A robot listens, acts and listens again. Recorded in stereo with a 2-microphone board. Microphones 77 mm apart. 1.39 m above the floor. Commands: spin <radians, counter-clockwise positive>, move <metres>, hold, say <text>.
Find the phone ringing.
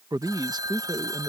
spin -1.05
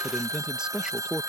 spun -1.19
spin -0.96
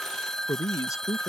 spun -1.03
spin 0.17
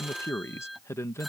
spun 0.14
say Found it: a phone ringing, straight ahead.